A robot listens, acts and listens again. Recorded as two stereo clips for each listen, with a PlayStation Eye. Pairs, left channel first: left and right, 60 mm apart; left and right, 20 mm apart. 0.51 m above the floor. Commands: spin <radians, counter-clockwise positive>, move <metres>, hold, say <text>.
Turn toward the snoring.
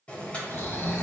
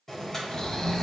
spin 0.79
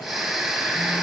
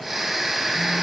say Facing the snoring, 1 to 2 m away.